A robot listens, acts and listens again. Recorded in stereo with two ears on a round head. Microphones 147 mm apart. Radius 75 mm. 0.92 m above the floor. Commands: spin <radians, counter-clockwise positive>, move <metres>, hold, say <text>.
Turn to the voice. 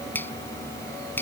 hold
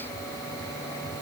hold
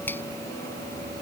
say I can't make out anyone speaking, only a finger snap.